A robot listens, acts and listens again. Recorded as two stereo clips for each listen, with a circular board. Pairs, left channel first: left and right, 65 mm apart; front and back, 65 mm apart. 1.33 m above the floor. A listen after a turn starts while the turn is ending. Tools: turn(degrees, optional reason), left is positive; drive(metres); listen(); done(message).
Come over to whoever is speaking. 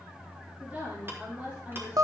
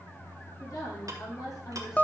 turn(degrees=-25, reason="The woman speaking: 25° right.")
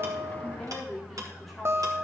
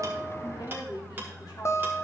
drive(metres=1.0)
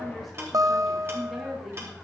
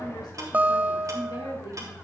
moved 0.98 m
drive(metres=1.0)
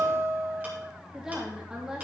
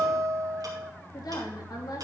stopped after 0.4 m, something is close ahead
turn(degrees=-10, reason="The woman speaking is now 10° right.")
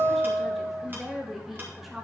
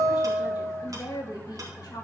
done("Something is in my way. I am facing the woman speaking but have not reached it.")